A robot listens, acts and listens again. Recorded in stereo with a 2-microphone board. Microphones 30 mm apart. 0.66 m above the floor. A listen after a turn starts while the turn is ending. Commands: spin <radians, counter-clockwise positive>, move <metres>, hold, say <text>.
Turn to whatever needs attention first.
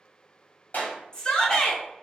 spin 0.35
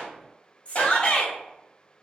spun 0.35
spin 2.44
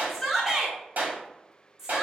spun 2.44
spin -0.26
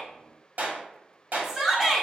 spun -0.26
say Found it: a shout, straight ahead, 1 to 2 m away.